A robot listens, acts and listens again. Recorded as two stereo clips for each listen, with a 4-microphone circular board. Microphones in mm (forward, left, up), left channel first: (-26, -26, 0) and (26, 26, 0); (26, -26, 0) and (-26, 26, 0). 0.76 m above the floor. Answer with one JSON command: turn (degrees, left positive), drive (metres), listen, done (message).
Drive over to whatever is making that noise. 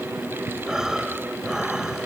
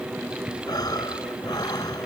{"turn": -35}
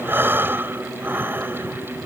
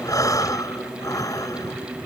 {"turn": -10}
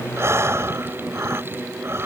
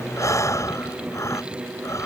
{"drive": 1.0}
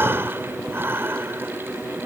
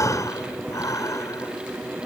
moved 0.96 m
{"turn": -10}
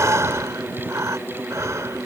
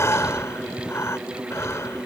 {"drive": 1.0}
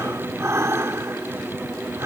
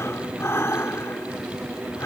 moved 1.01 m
{"drive": 1.0}
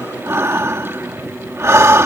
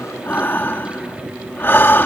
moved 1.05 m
{"drive": 1.0}
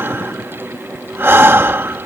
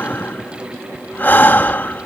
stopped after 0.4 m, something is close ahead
{"done": "Arrived at the breathing, straight ahead."}